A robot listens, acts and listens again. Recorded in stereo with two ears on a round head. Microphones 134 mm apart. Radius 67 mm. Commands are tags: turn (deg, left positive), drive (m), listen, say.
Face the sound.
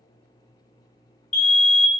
<turn deg="55"/>
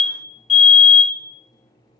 <turn deg="50"/>
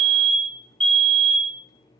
<say>Facing the fire alarm.</say>